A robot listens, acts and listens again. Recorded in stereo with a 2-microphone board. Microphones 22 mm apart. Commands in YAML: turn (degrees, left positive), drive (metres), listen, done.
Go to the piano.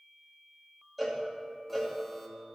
listen: true
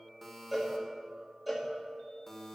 listen: true
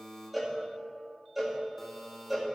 done: "I can't make out a piano, only a buzzer and a cowbell."